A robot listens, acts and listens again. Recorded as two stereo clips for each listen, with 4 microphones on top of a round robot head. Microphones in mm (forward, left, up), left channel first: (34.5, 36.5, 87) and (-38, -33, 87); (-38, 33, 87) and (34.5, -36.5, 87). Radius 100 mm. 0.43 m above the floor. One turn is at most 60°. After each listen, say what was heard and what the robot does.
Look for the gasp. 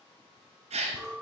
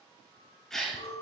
The gasp: 140° right. Turn 60° right.
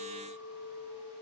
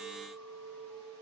Nothing new. It was at 80° right. Turn 60° right.
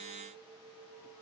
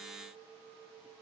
Nothing new. It was at 20° right. Turn 20° right.
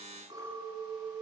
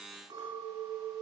I heard a gasp from this way, but can't make it out now.